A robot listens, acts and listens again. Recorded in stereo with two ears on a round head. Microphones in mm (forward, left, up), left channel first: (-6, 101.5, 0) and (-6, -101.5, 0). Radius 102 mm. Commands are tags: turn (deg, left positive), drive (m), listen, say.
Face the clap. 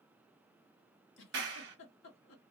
<turn deg="-45"/>
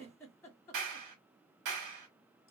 <turn deg="-85"/>
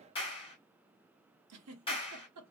<turn deg="20"/>
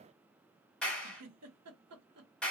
<say>Found it: a clap, straight ahead, 1 to 2 m away.</say>